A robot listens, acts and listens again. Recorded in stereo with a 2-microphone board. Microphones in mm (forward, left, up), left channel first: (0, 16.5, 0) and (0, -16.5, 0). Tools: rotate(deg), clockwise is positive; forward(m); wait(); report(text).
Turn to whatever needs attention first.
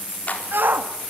rotate(90)
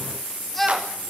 report("Found it: a shout, straight ahead.")